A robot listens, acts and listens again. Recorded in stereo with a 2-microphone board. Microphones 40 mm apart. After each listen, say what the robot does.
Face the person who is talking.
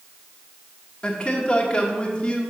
Turn 25° left.
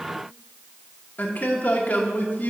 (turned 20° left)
Turn 130° left.
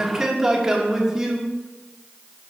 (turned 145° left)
Turn 15° right.
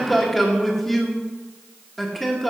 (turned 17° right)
Facing the man speaking, 1 to 2 m away.